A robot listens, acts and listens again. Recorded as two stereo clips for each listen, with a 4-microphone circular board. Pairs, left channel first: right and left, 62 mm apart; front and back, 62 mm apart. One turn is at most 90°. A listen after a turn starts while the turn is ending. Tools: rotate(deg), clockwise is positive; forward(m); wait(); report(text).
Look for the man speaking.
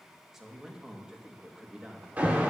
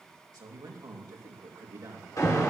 rotate(-90)
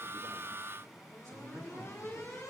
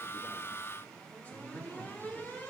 rotate(-60)
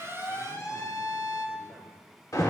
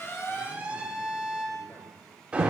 wait()
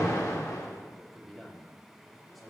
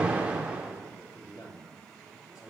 report("Facing the man speaking.")